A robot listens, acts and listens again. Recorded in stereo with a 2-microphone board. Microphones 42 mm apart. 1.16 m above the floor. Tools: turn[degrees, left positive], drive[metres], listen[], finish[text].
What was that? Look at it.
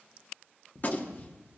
Thought: The gunshot: about 40° left or 140° left.
Action: turn[40]
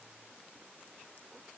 Action: listen[]
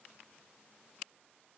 Action: finish[I heard a gunshot, but can't make it out now. It was about straight ahead or 100° left.]